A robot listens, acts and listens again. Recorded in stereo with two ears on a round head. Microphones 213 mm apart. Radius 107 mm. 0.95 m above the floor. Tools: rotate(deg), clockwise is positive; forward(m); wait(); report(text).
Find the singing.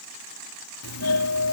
wait()
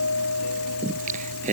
rotate(30)
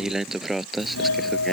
report("Facing the singing.")